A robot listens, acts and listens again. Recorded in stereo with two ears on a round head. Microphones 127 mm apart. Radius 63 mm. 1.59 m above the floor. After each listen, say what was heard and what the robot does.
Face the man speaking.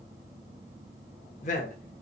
The man speaking: about 60° left or 120° left. Turn 60° left.
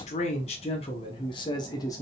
So it is at 25° left. Turn 25° left.
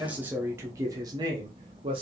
The man speaking is now 40° right. Turn 40° right.
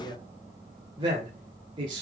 The man speaking is now 30° right. Turn 30° right.
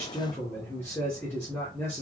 The man speaking is now 15° left. Turn 15° left.
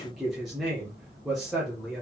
Found it: a man speaking, straight ahead.